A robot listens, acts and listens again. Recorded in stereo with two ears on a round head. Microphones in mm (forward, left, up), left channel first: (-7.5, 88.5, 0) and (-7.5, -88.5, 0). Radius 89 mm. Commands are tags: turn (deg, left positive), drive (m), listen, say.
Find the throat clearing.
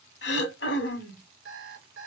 <turn deg="60"/>
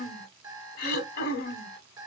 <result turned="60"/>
<turn deg="55"/>
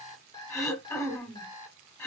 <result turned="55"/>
<turn deg="15"/>
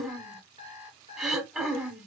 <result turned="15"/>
<say>Found it: throat clearing, straight ahead, 1 to 2 m away.</say>